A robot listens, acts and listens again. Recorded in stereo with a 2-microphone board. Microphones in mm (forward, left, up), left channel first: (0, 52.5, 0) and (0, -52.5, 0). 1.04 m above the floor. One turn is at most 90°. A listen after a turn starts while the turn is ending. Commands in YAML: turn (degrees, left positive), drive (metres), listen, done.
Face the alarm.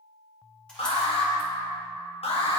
turn: 90
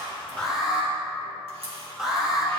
done: "Facing the alarm, 1 to 2 m away."